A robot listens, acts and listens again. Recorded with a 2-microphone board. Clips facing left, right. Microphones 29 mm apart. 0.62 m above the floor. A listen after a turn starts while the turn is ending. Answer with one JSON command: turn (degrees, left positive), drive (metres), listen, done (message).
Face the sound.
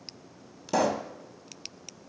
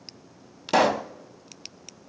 {"turn": -60}
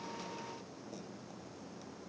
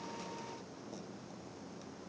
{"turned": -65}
{"listen": true}
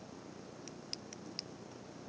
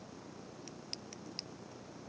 {"done": "I heard a pop, but can't make it out now. It was about 5° left or 55° right."}